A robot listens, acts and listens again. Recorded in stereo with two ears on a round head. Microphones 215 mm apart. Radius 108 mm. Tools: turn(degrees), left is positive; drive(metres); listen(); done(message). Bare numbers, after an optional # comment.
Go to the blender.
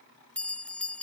listen()
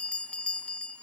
listen()
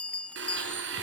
# The blender: about 55° right or 125° right.
turn(-55)
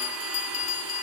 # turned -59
# So it is at 65° right.
turn(-65)
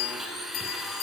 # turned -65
drive(1.0)
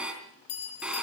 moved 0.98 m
drive(1.0)
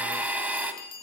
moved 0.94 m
drive(1.0)
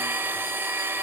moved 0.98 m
# The blender is now 10° right.
turn(-10)
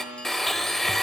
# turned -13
drive(1.0)
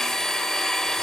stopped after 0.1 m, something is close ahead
done("I am next to the blender.")